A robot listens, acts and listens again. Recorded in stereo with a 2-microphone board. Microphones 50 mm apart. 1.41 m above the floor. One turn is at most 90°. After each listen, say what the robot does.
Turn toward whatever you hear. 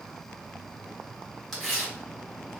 Turn 30° left.
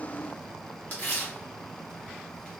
Turn 90° left.
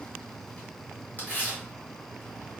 Turn 40° left.
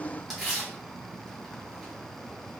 Turn 10° right.
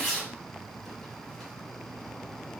Found it: tearing paper, straight ahead.